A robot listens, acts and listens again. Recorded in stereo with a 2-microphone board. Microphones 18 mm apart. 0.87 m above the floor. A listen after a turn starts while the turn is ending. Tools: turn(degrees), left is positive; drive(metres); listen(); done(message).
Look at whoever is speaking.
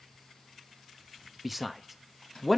turn(degrees=30)
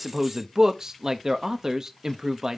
turn(degrees=-35)
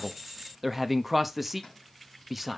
done("Found it: a man speaking, straight ahead, under 1 m away.")